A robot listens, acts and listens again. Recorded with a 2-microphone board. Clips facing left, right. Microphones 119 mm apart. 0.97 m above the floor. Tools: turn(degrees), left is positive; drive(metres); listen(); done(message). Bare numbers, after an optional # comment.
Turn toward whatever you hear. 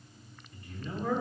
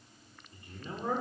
# The man speaking: about 20° right or 160° right.
turn(-20)
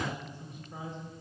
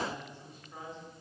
# So it is at 20° left.
turn(20)
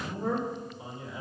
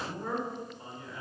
# The man speaking is now 15° left.
turn(15)
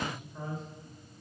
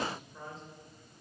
done("Facing the man speaking.")